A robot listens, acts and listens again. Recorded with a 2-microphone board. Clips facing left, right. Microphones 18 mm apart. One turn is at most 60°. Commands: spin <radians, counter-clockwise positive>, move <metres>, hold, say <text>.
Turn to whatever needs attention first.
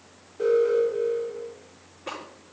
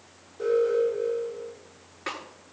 spin 0.52
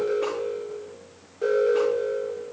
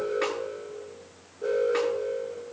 spin 1.05
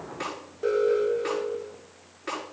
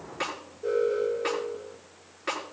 spin 1.05
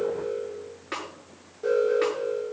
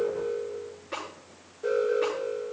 spin 0.26
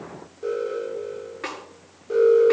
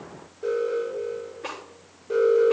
say Found it: an alarm, straight ahead, over 4 m away.